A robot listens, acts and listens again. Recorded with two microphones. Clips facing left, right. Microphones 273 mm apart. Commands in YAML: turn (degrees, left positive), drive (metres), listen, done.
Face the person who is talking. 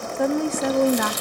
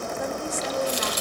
turn: 70
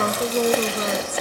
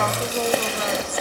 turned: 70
turn: 35
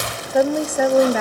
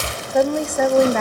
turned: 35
done: "Facing the woman speaking."